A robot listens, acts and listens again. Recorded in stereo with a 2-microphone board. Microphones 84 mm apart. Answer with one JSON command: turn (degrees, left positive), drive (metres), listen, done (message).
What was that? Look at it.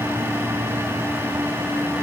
{"listen": true}
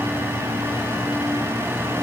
{"listen": true}
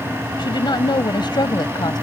{"turn": 60}
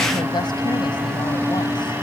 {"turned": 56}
{"listen": true}
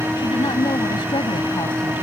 {"turn": 65}
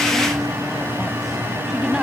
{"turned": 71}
{"listen": true}
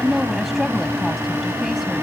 {"done": "Facing the woman speaking."}